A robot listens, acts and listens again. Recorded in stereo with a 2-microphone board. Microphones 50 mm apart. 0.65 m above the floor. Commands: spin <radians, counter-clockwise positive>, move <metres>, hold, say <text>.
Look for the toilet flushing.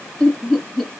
hold
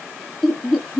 hold
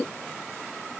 say I can't make out a toilet flushing to turn to.